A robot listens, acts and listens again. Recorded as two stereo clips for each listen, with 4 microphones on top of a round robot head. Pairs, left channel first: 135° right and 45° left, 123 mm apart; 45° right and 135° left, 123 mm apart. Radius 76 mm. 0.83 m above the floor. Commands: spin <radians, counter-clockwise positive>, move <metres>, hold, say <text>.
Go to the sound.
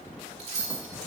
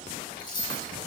spin 0.17
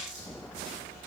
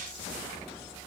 hold
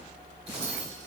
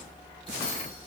hold
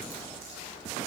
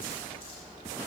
say Facing where the keys jangling came from. I can't hear it now. I did not reach it.